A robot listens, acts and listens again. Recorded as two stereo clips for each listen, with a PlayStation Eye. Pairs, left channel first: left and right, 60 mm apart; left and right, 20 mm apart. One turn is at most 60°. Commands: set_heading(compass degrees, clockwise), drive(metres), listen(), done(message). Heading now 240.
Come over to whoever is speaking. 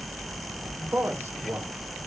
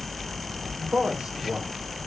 set_heading(275)
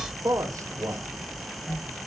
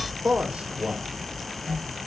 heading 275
set_heading(335)
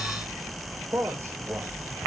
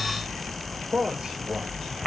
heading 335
set_heading(30)
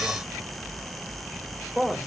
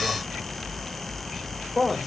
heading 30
set_heading(40)
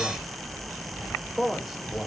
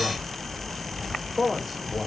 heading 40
drive(1.0)
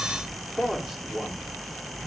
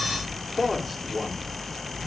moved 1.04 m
drive(1.0)
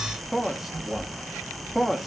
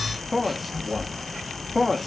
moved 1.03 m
drive(1.0)
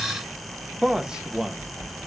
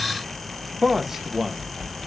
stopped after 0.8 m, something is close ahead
set_heading(55)
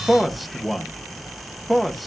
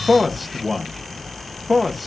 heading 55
done("I am next to the man speaking.")